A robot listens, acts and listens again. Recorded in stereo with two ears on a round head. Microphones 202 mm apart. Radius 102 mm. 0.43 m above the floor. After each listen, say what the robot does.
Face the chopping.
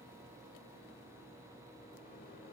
Keep listening.
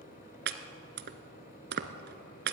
Turn 50° right.
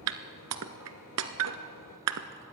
Turn 80° right.
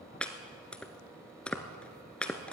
Facing the chopping, 1 to 2 m away.